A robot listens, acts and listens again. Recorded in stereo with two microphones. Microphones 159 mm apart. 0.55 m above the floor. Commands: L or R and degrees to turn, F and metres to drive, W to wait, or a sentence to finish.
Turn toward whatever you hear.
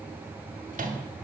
R55
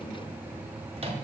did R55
R45
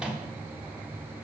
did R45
Facing the microwave.